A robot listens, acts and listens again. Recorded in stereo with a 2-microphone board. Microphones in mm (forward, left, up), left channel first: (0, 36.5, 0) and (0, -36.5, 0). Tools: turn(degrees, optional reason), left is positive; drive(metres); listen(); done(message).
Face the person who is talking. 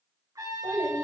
turn(degrees=-35, reason="The child speaking: about 35° right or 145° right.")
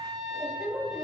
done("Found it: a child speaking, straight ahead, 2 to 4 m away.")